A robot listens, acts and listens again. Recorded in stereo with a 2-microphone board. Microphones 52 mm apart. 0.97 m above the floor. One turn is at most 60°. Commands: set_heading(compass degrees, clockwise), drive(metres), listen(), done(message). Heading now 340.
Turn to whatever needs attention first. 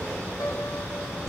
listen()
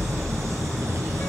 listen()
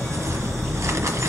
done("I can't make out anything urgent to turn to.")